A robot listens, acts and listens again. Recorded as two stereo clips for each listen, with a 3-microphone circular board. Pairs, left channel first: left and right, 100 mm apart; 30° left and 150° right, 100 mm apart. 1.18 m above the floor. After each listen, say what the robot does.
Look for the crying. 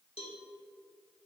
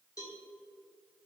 Keep listening.
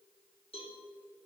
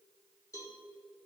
Keep listening.
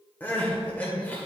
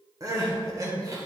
Turn 160° left.
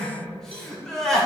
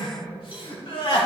Found it: crying, straight ahead, 1 to 2 m away.